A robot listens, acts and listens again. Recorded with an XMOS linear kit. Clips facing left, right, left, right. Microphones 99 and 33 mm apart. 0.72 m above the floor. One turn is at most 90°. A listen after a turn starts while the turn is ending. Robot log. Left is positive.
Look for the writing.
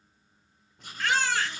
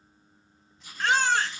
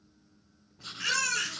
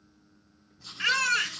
note: The writing: about 55° left or 125° left.
cmd yaw +55
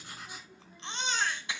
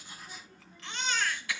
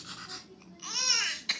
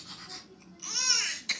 cmd idle
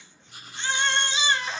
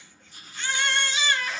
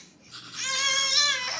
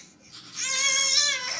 note: So it is at 70° left.
cmd yaw +70
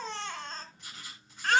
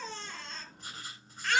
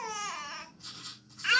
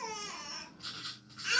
note: The writing is now 40° right.
cmd yaw -40
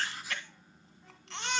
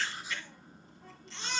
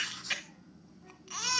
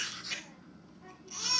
note: The writing is now 20° right.
cmd yaw -20
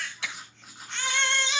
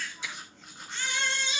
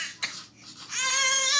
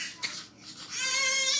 end: Facing the writing, 2 to 4 m away.